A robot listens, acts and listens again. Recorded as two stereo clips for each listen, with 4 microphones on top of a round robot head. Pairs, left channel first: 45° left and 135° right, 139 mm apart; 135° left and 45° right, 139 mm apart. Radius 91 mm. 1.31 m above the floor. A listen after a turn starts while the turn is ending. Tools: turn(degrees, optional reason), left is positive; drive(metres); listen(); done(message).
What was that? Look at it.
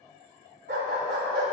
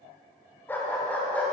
turn(degrees=-150, reason="The dog barking: 150° right.")
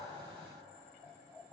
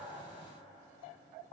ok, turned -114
turn(degrees=-35, reason="Nothing new. It was at 35° right.")
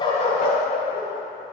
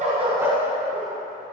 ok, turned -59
turn(degrees=30, reason="The dog barking is now 30° left.")
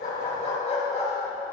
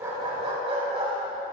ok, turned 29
done("Found it: a dog barking, straight ahead.")